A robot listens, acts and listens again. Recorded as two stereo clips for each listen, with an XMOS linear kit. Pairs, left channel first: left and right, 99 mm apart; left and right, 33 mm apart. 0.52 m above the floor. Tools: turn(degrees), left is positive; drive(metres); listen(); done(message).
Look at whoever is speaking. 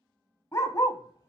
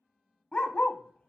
listen()
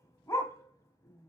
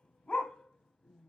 listen()
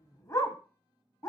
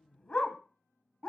done("I can't make out anyone speaking to turn to.")